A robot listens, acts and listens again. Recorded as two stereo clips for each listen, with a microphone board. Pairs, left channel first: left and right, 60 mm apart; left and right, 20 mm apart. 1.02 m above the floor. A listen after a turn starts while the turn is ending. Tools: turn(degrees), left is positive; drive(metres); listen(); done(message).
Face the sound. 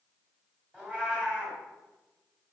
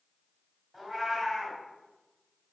turn(degrees=-20)
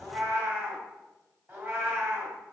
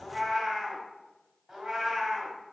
turn(degrees=-145)
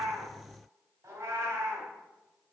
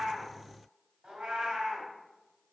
turn(degrees=-45)
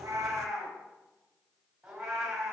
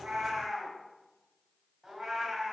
turn(degrees=-10)
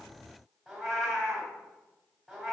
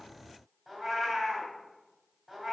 done("Found it: a cat meowing, straight ahead, 2 to 4 m away.")